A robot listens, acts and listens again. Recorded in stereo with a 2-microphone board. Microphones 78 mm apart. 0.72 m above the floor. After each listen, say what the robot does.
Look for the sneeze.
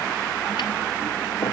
Keep listening.
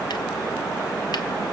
Keep listening.
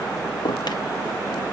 I can't make out a sneeze.